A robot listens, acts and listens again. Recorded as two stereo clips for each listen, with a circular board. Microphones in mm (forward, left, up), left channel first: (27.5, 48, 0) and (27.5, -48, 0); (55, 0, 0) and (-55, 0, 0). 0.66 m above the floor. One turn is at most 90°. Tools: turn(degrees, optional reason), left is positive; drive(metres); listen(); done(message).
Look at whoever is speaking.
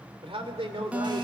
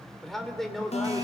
turn(degrees=-85, reason="The man speaking: 85° right.")
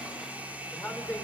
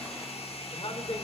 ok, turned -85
turn(degrees=20, reason="The man speaking is now 20° left.")
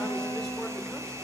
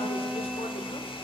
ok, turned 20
listen()
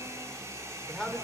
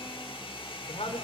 done("Facing the man speaking.")